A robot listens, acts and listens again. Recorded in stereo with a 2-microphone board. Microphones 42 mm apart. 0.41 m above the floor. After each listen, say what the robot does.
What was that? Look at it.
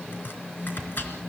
Turn 50° left.
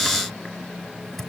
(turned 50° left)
Facing the chopping.